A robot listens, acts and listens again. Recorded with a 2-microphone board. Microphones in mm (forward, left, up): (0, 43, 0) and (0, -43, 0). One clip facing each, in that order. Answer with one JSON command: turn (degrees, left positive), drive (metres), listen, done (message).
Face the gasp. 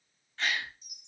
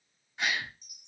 {"turn": -30}
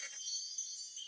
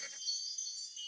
{"listen": true}
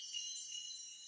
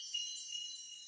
{"done": "I heard a gasp, but can't make it out now. It was about 15° left or 135° right."}